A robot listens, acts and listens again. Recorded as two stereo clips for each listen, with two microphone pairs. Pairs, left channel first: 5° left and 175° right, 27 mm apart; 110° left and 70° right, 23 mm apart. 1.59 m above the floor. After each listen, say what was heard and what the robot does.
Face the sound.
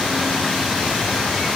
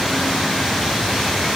Keep listening.
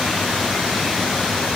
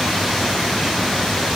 Keep listening.
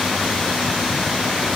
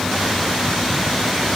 I can't make out anything to turn to.